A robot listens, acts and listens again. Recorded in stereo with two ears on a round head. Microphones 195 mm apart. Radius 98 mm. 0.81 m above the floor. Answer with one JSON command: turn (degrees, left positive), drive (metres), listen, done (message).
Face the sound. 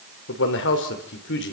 {"turn": 55}
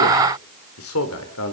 {"turn": 75}
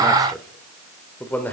{"turn": 10}
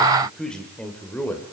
{"turn": 10}
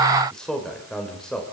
{"done": "Found it: a man speaking, straight ahead."}